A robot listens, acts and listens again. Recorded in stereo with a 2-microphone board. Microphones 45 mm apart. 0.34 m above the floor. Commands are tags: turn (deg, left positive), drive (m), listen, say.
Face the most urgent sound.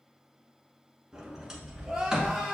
<turn deg="-30"/>
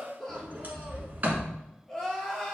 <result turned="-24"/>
<turn deg="10"/>
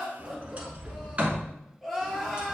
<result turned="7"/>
<say>Facing the crying.</say>